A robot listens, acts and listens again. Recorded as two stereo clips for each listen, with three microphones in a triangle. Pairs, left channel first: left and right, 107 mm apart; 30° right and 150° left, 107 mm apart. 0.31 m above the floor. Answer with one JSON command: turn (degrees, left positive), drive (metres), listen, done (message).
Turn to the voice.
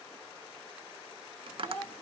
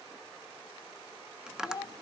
{"turn": 15}
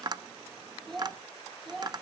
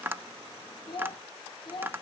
{"done": "Found it: a child speaking, straight ahead, 1 to 2 m away."}